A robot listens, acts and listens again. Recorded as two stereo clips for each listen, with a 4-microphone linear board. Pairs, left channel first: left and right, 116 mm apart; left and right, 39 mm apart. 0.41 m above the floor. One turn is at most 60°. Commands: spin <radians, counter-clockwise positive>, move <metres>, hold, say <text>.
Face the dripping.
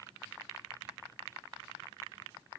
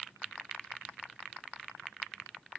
hold
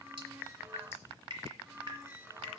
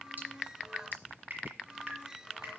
spin -0.79
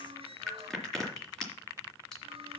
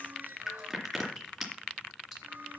say Found it: dripping, straight ahead, 2 to 4 m away.